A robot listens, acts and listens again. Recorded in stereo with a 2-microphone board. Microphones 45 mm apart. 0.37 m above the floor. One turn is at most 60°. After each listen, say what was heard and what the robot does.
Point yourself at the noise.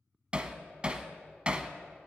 The hammering: about 25° right or 155° right. Turn 25° right.
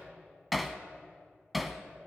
Found it: hammering, straight ahead.